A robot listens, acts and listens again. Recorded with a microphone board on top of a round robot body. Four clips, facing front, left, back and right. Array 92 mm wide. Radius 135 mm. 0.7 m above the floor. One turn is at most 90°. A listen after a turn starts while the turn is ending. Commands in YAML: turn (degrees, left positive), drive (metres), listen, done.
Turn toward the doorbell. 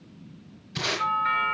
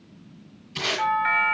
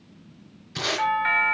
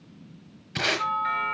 turn: 90
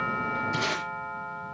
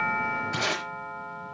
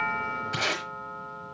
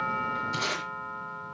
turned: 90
turn: 50
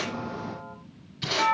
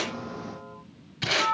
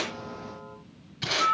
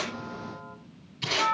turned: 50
done: "Facing the doorbell."